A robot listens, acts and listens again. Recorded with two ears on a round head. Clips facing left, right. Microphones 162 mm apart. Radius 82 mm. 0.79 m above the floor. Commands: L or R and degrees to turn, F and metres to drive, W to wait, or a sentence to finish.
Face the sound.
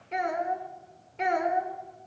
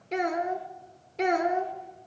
R45
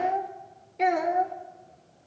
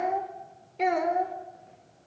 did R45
Found it: a child speaking, straight ahead.